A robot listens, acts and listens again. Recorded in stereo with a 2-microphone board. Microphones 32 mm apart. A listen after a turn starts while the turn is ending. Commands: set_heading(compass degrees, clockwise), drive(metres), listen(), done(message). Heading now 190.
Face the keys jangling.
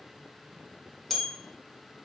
listen()
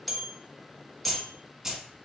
set_heading(220)
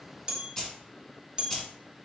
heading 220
set_heading(200)
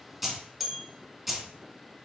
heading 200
done("Facing the keys jangling.")